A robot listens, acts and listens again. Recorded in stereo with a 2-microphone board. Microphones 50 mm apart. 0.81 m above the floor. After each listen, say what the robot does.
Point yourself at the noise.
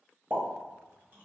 Turn 40° right.
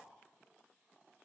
Keep listening.
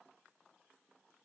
I heard a pop, but can't make it out now. It was about straight ahead or 100° right.